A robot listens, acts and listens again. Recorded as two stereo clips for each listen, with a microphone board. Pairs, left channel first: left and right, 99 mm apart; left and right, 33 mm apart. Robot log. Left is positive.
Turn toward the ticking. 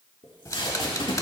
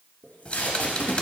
note: The ticking: about 35° left or 145° left.
cmd yaw +35
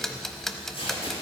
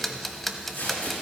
end: Found it: ticking, straight ahead.